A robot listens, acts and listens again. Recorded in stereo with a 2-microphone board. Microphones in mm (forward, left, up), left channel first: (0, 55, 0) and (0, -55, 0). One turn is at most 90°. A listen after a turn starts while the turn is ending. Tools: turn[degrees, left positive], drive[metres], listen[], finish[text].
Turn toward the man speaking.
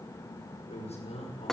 Thought: The man speaking: about 70° left or 110° left.
Action: turn[70]
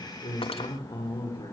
Thought: So it is at 45° left.
Action: turn[45]
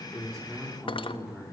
Action: finish[Found it: a man speaking, straight ahead.]